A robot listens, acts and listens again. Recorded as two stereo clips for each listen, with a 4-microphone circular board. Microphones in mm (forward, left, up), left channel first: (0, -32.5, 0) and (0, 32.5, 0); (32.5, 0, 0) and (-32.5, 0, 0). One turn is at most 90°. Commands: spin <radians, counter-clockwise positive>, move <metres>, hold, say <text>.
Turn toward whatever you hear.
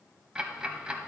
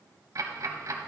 spin 1.57
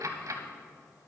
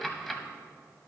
spin 1.48
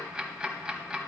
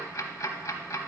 spin 0.26
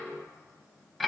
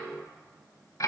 say Facing the ticking, under 1 m away.